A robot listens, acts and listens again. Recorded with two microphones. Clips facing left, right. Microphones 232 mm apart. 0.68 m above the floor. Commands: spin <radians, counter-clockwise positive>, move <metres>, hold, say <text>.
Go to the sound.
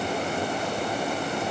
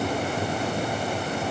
hold
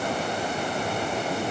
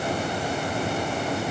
hold
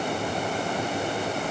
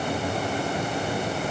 say I can't make out anything to turn to.